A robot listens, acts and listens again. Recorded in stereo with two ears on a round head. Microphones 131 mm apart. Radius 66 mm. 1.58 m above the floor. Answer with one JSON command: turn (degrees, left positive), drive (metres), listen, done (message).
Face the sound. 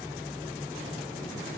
{"listen": true}
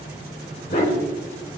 {"turn": 55}
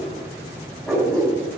{"done": "Found it: a dog barking, straight ahead, 2 to 4 m away."}